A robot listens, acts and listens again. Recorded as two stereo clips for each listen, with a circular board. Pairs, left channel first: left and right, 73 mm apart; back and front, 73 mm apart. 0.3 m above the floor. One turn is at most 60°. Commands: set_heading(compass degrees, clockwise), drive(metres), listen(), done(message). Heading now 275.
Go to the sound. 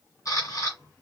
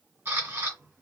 set_heading(215)
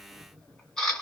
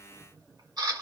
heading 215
set_heading(205)
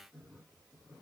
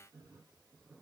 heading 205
listen()
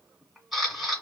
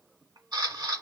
drive(1.0)
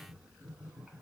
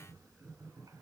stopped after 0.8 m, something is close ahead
listen()
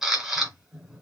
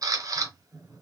done("I am next to the camera shutter.")